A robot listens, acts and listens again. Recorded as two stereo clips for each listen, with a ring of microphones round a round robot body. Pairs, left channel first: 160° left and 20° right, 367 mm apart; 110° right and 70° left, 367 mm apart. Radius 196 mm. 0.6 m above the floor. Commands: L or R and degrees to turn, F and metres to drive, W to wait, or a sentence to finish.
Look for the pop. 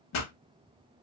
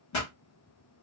R155
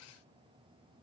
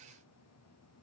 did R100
R55
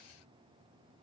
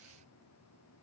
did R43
R15
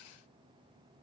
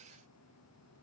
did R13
I heard a pop from this way, but can't make it out now.